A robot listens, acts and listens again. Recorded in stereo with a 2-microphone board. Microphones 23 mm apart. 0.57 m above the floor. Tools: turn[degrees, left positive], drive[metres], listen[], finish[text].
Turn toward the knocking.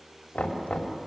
Thought: The knocking: about 70° left or 110° left.
Action: turn[70]
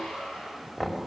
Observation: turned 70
Thought: So it is at 15° left.
Action: turn[15]
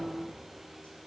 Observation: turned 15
Action: listen[]
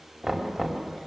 Action: finish[Facing the knocking, 2 to 4 m away.]